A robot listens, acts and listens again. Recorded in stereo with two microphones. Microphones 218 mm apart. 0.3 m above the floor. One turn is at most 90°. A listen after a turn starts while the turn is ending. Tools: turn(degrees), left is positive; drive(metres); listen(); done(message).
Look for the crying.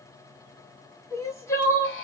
turn(degrees=30)
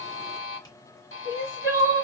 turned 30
turn(degrees=-15)
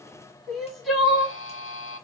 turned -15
done("Facing the crying.")